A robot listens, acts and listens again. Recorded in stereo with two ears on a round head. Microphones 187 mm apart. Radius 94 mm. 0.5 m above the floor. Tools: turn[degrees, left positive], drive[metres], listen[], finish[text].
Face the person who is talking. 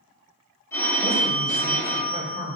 Thought: The man speaking: about 45° left or 135° left.
Action: turn[45]
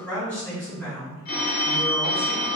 Thought: So it is at 10° left.
Action: turn[10]
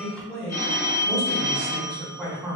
Action: finish[Facing the man speaking, 1 to 2 m away.]